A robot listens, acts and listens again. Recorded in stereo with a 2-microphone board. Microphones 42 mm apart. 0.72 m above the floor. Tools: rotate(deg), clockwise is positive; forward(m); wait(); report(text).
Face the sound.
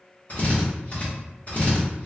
rotate(-40)
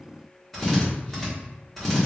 report("Found it: a drill, straight ahead.")